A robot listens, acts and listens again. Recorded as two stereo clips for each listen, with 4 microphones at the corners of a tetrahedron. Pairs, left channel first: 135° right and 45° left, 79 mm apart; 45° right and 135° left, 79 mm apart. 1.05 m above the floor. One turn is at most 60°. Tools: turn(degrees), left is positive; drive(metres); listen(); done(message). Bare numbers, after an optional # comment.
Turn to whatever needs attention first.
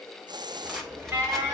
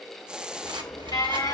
# The alarm: 20° right.
turn(-20)
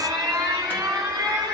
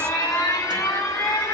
done("Found it: an alarm, straight ahead, over 4 m away.")